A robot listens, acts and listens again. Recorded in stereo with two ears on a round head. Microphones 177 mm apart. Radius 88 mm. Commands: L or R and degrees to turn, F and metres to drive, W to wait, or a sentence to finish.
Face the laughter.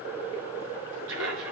R75
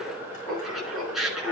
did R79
Facing the laughter, over 4 m away.